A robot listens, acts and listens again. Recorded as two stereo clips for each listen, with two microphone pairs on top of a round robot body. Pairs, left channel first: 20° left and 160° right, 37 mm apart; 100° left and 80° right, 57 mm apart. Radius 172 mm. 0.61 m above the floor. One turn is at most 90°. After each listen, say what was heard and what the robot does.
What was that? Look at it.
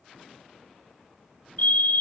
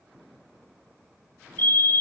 The fire alarm: 55° left. Turn 55° left.
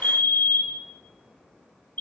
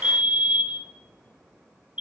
The fire alarm is now 15° right. Turn 15° right.
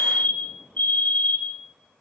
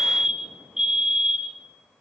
Facing the fire alarm.